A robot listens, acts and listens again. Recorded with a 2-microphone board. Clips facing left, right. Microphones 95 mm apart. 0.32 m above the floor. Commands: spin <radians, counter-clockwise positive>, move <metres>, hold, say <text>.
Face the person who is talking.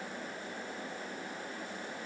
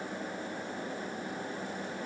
hold
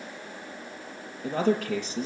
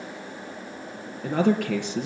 spin -1.22
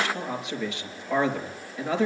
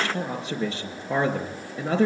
spin -0.61
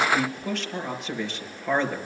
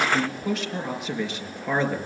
say Facing the man speaking.